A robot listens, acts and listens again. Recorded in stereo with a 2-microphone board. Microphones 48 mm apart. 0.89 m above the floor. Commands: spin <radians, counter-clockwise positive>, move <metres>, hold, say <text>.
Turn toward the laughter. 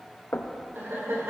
spin -1.13
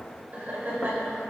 spin -0.79
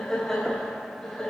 spin 0.17
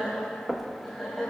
say Found it: laughter, straight ahead, over 4 m away.